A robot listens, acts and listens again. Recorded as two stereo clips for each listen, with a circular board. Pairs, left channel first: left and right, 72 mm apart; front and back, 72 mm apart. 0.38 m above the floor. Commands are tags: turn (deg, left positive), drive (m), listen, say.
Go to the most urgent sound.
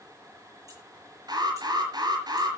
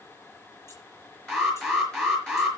<turn deg="-85"/>
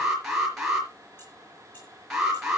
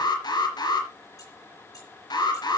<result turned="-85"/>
<drive m="1.0"/>
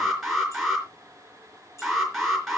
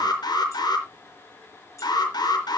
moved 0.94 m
<drive m="1.0"/>
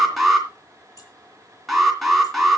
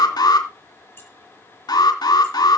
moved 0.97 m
<drive m="1.0"/>
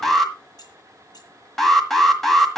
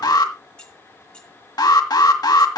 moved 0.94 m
<drive m="1.0"/>
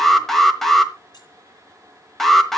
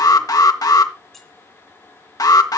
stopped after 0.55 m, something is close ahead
<say>Arrived at the alarm, straight ahead.</say>